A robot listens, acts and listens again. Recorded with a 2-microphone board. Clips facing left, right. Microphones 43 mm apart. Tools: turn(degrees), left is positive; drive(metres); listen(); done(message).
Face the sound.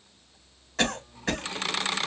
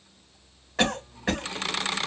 turn(degrees=-30)
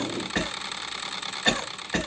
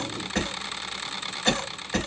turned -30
turn(degrees=10)
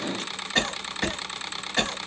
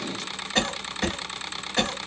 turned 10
done("Facing the cough.")